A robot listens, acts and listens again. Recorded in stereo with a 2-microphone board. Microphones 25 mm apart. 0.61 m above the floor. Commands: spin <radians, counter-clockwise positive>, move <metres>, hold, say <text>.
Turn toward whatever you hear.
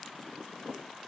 hold
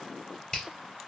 spin 0.61
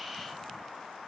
hold
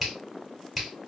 say Found it: a finger snap, straight ahead.